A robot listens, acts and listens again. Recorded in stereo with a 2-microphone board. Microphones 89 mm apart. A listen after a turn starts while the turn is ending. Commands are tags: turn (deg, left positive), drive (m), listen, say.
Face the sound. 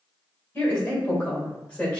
<turn deg="30"/>
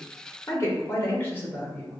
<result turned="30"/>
<turn deg="20"/>
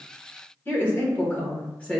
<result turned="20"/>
<turn deg="30"/>
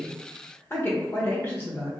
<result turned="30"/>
<turn deg="155"/>
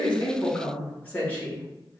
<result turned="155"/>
<turn deg="20"/>
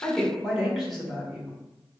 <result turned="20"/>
<say>Facing the woman speaking, 1 to 2 m away.</say>